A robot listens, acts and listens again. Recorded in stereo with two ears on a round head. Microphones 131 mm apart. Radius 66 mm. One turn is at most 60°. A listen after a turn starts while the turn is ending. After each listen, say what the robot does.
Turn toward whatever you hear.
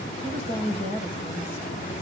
Turn 50° left.
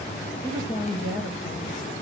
Turn 60° left.
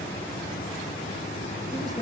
Turn 25° left.
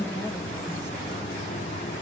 Keep listening.
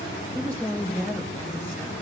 Turn 10° left.
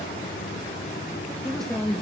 Facing the woman speaking.